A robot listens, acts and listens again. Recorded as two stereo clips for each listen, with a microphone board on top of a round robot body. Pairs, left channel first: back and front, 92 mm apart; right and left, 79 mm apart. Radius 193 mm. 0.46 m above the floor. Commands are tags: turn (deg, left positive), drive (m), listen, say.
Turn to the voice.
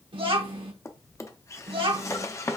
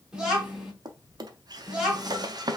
<turn deg="10"/>
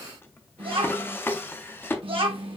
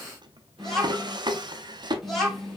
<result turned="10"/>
<say>Facing the child speaking.</say>